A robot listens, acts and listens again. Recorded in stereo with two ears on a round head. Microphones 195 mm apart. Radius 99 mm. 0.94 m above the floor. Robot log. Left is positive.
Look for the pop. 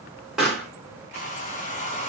cmd yaw +30
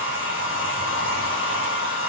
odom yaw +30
cmd idle
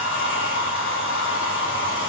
end: I heard a pop, but can't make it out now. It was about 30° right or 150° left.